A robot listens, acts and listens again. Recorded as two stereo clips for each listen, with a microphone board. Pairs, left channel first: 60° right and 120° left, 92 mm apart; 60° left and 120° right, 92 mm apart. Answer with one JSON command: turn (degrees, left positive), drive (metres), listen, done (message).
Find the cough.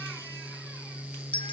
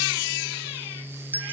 {"listen": true}
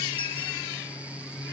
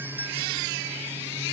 {"listen": true}
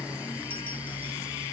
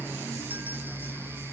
{"done": "I can't make out a cough to turn to."}